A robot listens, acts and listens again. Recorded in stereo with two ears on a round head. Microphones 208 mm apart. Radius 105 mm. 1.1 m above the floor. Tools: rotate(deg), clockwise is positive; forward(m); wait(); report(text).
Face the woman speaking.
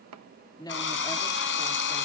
rotate(-15)
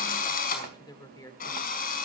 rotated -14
rotate(-15)
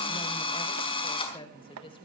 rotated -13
rotate(-25)
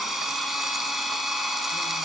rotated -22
wait()
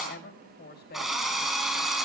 rotate(-135)
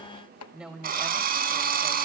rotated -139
report("Facing the woman speaking, over 4 m away.")